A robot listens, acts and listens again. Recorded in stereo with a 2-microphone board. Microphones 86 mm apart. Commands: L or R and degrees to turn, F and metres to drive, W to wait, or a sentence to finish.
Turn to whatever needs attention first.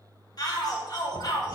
L50
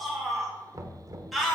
Found it: a shout, straight ahead.